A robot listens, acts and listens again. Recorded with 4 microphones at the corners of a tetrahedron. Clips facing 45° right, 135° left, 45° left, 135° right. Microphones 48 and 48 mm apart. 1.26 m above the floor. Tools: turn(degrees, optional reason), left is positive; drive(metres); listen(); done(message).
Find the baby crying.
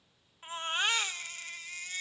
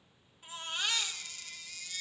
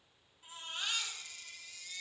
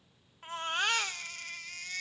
turn(degrees=-100, reason="The baby crying: 100° right.")
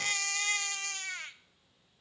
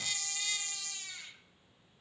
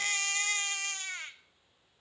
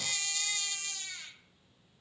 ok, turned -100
done("Facing the baby crying.")